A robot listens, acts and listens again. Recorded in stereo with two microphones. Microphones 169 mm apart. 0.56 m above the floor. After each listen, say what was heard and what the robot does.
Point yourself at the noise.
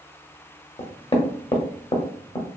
The knocking: about 35° left or 145° left. Turn 35° left.
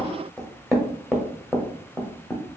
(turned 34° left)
Facing the knocking.